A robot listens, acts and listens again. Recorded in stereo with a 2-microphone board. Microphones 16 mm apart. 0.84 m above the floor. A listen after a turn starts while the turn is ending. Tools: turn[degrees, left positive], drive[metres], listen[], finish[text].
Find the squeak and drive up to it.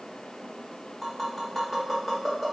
Action: listen[]
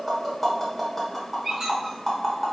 Thought: The squeak: about 40° right or 140° right.
Action: turn[-40]
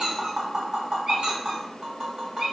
Thought: So it is at 100° right.
Action: turn[-100]
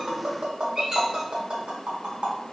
Thought: The squeak is now 30° right.
Action: turn[-30]
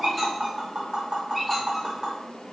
Action: listen[]
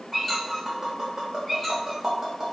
Thought: The squeak is now 10° left.
Action: turn[10]
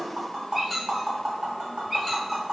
Action: drive[1.0]
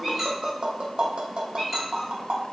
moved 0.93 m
Action: drive[1.0]
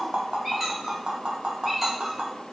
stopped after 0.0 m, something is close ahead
Action: finish[I am next to the squeak.]